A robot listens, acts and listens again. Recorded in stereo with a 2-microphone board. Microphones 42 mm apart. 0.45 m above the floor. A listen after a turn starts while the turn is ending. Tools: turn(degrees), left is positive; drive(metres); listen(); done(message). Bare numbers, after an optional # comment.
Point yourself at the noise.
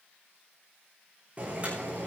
# The boiling: about 30° right or 150° right.
turn(-30)
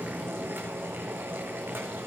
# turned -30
# So it is at 120° right.
turn(-120)
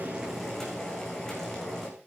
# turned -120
# The boiling is now 10° left.
turn(10)
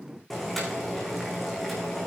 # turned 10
done("Facing the boiling, over 4 m away.")